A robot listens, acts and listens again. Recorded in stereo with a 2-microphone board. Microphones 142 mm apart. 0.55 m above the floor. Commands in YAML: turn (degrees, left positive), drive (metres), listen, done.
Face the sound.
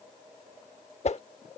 turn: 50
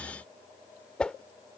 done: "Found it: a whoosh, straight ahead."